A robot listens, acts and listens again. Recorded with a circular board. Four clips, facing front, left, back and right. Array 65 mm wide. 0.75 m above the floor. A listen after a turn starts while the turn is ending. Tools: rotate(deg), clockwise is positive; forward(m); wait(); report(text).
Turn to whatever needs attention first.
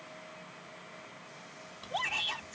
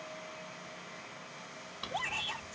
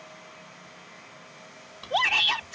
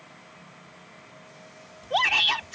rotate(130)
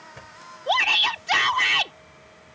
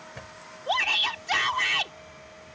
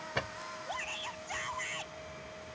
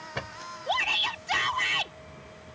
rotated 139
rotate(-10)
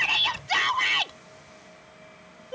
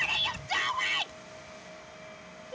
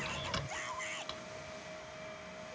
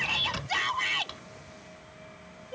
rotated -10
report("Facing the shout.")